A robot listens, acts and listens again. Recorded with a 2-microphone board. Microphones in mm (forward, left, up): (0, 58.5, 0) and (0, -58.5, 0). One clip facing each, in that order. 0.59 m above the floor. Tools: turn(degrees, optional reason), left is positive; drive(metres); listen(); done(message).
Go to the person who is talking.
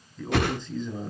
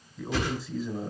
turn(degrees=-30)
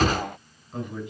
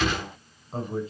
turn(degrees=-140, reason="So it is at 140° right.")
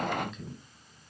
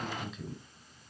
drive(metres=1.0)
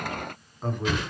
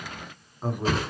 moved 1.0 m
drive(metres=1.0)
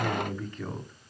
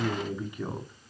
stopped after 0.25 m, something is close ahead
turn(degrees=-15, reason="The man speaking is now 15° right.")
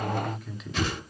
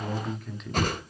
done("Arrived at the man speaking, straight ahead.")